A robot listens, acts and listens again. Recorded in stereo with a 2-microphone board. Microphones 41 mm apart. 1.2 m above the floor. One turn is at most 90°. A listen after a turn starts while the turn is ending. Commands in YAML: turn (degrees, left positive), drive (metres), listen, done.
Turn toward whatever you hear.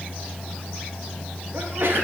turn: -65
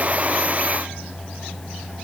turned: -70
listen: true
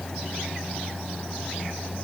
done: "I heard a sneeze, but can't make it out now. It was about 5° left or 45° right."